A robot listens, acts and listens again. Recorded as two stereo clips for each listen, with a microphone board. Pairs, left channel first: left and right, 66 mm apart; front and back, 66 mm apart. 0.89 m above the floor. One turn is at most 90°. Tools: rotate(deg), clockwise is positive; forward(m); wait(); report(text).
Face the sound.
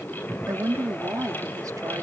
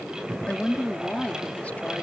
rotate(65)
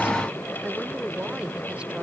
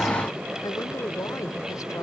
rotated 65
wait()
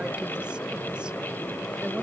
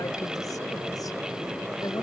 wait()
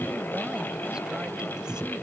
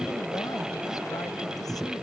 report("Facing where the woman speaking came from. I can't hear it now.")